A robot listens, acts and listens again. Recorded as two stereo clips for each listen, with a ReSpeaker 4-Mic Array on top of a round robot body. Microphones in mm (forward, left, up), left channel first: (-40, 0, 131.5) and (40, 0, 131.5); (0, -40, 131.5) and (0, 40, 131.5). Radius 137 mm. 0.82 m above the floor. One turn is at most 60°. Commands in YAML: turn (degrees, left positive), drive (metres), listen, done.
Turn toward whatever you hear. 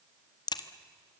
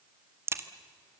turn: 60
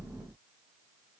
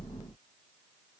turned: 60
turn: 60
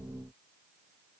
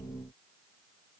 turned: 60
turn: 30
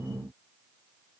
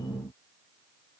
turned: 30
done: "Facing where the crack came from. I can't hear it now."